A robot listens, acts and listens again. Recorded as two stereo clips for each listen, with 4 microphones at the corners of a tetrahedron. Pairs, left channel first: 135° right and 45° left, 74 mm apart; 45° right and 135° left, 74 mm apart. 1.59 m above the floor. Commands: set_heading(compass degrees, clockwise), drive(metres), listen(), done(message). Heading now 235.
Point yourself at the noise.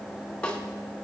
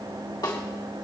set_heading(295)
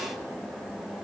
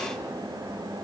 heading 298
listen()
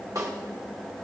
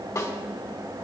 done("Facing the snare drum, 2 to 4 m away.")